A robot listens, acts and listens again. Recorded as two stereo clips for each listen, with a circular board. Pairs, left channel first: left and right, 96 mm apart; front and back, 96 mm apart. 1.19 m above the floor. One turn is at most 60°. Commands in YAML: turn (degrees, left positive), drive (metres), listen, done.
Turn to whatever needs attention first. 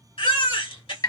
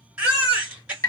turn: 60
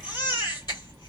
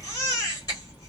turn: 45
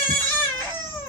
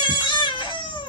turn: 20
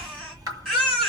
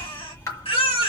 done: "Found it: a baby crying, straight ahead."